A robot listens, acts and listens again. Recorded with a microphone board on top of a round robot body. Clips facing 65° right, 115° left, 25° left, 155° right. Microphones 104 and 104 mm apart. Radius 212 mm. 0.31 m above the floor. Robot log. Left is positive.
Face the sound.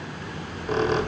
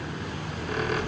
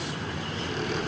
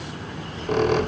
note: The squeak: 130° right.
cmd yaw -130
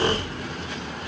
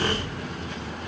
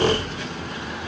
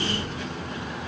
end: Facing the squeak.